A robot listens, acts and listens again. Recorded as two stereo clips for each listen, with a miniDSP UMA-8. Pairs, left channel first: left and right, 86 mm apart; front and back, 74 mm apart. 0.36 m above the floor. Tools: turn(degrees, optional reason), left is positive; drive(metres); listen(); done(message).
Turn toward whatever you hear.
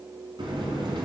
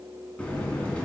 turn(degrees=-75, reason="The buzzer: 75° right.")
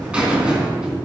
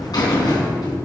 turn(degrees=-15, reason="The buzzer is now 15° right.")
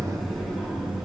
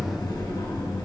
done("Found it: a buzzer, straight ahead, 2 to 4 m away.")